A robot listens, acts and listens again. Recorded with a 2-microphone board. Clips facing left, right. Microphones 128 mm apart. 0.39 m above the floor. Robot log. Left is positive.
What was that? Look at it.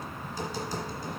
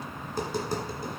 note: The tapping: about 55° right or 125° right.
cmd yaw -55
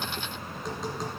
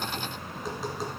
end: Facing the tapping, 1 to 2 m away.